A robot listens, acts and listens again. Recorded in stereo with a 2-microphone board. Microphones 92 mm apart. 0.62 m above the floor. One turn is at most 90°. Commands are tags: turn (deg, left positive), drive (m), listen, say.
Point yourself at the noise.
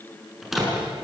<turn deg="30"/>
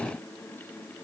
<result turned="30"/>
<listen/>
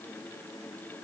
<say>I heard a door slam, but can't make it out now. It was about 30° right or 150° left.</say>